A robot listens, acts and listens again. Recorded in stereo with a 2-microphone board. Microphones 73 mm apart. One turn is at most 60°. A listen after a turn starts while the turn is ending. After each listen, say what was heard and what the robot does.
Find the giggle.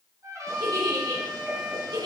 The giggle: about 75° right or 105° right. Turn 60° right.
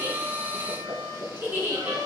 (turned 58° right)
So it is at 25° right. Turn 25° right.
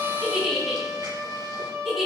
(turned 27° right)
Found it: a giggle, straight ahead.